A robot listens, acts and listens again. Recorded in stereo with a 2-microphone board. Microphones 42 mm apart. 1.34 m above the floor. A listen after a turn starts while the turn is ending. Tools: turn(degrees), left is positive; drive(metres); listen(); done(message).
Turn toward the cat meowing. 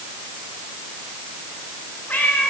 turn(degrees=50)
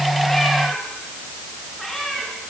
done("Facing the cat meowing, over 4 m away.")